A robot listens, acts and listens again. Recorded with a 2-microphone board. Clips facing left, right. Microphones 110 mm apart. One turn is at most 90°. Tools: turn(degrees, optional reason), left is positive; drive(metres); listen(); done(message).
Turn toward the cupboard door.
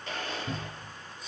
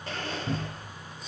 turn(degrees=-55, reason="The cupboard door: about 55° right or 125° right.")
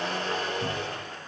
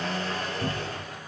listen()
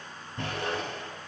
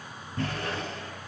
turn(degrees=-60, reason="So it is at 60° right.")
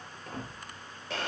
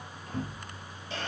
done("Found it: a cupboard door, straight ahead, 2 to 4 m away.")